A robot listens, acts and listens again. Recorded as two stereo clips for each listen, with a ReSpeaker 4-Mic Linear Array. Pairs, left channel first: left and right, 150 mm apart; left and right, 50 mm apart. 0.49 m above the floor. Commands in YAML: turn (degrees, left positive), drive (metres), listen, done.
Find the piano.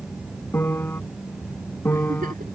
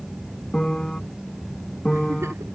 turn: 30
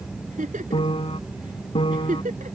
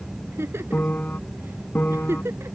turn: 140
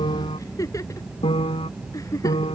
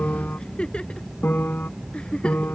turn: 45
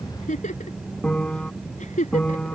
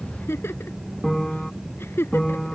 done: "Facing the piano."